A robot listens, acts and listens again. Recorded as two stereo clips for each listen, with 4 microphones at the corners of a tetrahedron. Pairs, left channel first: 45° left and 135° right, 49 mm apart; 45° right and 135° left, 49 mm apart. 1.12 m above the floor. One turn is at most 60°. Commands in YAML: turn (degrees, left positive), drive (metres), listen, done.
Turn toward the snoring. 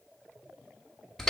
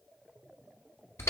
listen: true
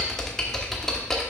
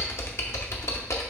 listen: true
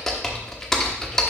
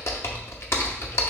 done: "I can't make out snoring to turn to."